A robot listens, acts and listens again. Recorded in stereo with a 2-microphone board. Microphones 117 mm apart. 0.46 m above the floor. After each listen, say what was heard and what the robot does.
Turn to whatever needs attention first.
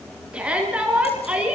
Turn 30° right.
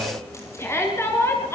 So it is at 20° left. Turn 20° left.
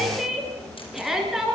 Facing the shout.